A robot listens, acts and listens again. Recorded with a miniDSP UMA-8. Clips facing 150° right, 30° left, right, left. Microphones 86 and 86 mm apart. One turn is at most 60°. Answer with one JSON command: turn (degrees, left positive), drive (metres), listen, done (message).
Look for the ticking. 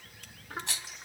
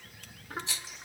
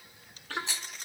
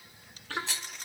{"listen": true}
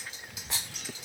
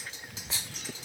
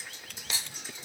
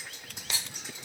{"listen": true}
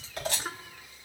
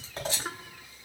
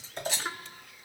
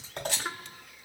{"done": "I can't make out ticking to turn to."}